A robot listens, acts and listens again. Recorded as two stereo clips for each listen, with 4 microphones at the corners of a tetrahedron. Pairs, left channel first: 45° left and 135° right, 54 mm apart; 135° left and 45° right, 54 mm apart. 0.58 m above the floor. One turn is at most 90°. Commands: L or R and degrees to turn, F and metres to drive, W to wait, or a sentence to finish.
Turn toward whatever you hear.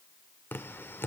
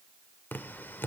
L85
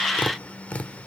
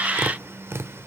R15
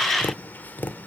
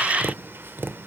Facing the tapping, 1 to 2 m away.